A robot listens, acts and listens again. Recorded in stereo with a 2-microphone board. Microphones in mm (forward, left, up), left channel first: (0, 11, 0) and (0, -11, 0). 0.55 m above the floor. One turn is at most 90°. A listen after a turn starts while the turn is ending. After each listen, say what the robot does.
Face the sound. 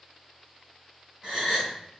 Turn 35° right.
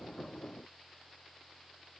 Keep listening.
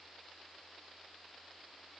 I heard a gasp, but can't make it out now. It was about straight ahead or 110° right.